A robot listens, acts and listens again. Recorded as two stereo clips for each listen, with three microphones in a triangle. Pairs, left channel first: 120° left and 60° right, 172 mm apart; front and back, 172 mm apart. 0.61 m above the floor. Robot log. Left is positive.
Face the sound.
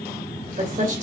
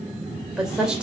note: The woman speaking: 95° right.
cmd yaw -95
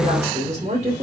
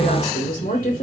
note: The woman speaking is now 20° right.
cmd yaw -20
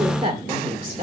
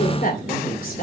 note: The woman speaking is now 20° right.
cmd yaw -20
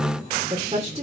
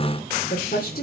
note: The woman speaking is now 15° right.
cmd yaw -15
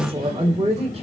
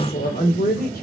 note: The woman speaking is now 10° right.
cmd yaw -10
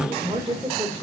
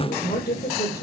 end: Facing the woman speaking, 2 to 4 m away.